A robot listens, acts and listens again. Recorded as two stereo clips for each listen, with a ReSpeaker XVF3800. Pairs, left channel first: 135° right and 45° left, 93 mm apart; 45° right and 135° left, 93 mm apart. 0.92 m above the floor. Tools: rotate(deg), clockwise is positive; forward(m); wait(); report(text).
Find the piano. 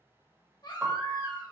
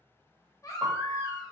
rotate(-90)
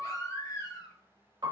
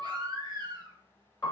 report("Found it: a piano, straight ahead, 1 to 2 m away.")